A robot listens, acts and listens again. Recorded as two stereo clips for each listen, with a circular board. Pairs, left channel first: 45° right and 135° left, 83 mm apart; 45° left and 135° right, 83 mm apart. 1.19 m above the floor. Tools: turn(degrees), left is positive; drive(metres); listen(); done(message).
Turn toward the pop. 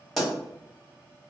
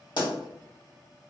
turn(degrees=45)
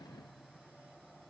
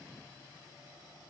done("Facing where the pop came from. I can't hear it now.")